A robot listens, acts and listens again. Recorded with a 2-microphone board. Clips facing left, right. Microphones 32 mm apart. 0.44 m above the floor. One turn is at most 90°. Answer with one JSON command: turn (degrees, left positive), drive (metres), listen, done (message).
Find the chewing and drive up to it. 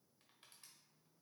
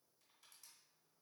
{"listen": true}
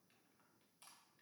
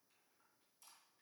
{"listen": true}
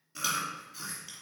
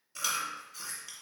{"turn": 30}
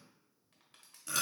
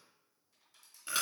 {"turn": -25}
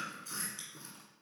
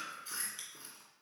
{"turn": -20}
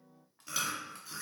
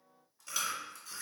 {"drive": 1.0}
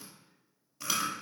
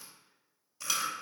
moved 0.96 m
{"turn": 10}
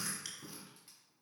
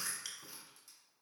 {"drive": 1.0}
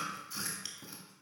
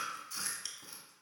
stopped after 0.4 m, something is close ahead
{"turn": 10}
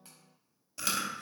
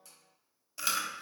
{"done": "I am next to the chewing."}